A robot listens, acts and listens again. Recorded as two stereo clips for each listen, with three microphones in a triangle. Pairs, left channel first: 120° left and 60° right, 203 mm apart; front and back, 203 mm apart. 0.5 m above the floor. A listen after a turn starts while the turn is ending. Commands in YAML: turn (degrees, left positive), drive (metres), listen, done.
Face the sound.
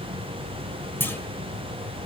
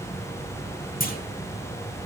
turn: 40
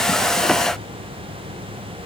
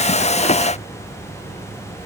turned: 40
done: "I heard a clunk from this way, but can't make it out now."